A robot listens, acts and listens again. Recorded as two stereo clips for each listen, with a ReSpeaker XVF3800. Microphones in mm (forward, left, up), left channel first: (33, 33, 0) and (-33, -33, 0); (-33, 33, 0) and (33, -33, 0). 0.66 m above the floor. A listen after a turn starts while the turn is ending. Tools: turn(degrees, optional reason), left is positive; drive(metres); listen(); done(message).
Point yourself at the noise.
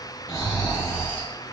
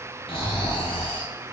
turn(degrees=110, reason="The snoring: 110° left.")
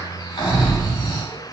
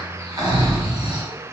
done("Found it: snoring, straight ahead, under 1 m away.")